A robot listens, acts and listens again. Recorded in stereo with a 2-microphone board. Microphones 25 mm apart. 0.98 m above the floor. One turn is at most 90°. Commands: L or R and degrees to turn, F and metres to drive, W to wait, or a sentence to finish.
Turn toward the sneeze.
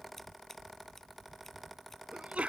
R70
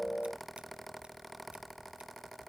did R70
W
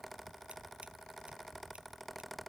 I heard a sneeze, but can't make it out now. It was about straight ahead or 40° right.